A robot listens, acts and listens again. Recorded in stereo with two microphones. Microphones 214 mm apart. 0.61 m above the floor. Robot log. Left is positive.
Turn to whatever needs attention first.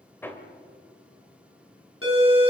cmd yaw +90
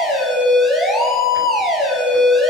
end: Facing the siren, over 4 m away.